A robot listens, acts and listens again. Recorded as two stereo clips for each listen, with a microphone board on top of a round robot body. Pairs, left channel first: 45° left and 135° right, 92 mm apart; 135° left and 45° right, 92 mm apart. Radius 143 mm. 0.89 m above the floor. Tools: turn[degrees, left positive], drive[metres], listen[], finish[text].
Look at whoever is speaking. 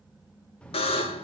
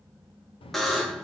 Thought: The child speaking: 125° left.
Action: turn[125]
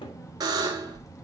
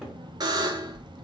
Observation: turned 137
Thought: The child speaking is now 10° right.
Action: turn[-10]
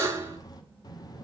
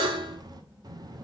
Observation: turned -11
Action: finish[Facing the child speaking, 1 to 2 m away.]